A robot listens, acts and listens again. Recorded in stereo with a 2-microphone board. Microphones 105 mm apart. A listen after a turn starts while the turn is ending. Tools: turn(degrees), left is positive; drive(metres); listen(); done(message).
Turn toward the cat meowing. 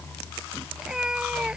turn(degrees=-30)
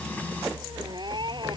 turn(degrees=-135)
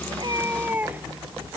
turn(degrees=-15)
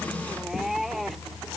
done("Facing the cat meowing.")